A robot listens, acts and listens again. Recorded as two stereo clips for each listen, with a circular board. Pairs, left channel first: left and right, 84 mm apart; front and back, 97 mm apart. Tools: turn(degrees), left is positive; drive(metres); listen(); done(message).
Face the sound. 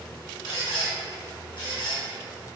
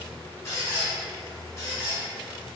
turn(degrees=60)
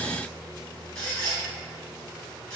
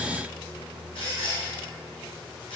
turn(degrees=10)
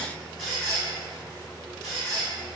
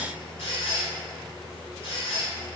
done("Facing the squeak, 1 to 2 m away.")